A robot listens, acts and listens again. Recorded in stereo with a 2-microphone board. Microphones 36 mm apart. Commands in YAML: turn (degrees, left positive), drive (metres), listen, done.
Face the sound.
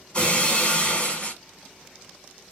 turn: 35
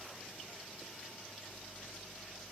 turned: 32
listen: true
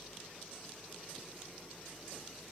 done: "I heard breaking glass, but can't make it out now. It was about straight ahead or 115° left."